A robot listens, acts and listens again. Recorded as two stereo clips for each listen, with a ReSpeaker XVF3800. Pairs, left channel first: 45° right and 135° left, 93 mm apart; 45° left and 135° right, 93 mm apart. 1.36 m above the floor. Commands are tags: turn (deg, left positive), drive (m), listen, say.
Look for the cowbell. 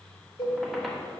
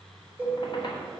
<turn deg="-60"/>
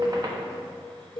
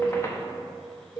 <say>Facing the cowbell, 1 to 2 m away.</say>